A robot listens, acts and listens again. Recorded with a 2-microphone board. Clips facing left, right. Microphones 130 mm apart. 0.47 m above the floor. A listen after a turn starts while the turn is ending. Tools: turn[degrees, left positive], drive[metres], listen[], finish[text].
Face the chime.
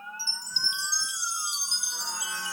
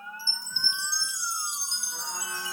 Action: turn[90]
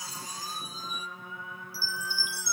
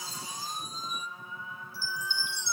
Action: finish[Found it: a chime, straight ahead.]